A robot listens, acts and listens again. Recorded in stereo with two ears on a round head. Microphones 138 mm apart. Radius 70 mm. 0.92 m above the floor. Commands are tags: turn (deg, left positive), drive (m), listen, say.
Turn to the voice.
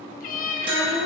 <turn deg="60"/>
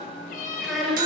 <say>Found it: a child speaking, straight ahead.</say>